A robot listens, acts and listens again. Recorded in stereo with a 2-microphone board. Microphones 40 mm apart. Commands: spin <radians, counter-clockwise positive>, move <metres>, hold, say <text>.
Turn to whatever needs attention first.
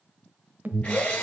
spin -0.87
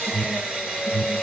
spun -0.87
spin -0.26
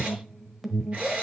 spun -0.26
say Found it: an alarm, straight ahead, 1 to 2 m away.